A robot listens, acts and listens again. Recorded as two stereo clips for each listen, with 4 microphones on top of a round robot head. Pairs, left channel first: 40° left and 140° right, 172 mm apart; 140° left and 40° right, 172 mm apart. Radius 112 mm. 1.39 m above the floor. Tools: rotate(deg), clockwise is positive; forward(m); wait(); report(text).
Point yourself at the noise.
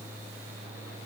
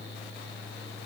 wait()
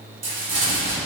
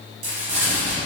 rotate(100)
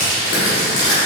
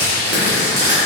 report("Found it: crumpling, straight ahead.")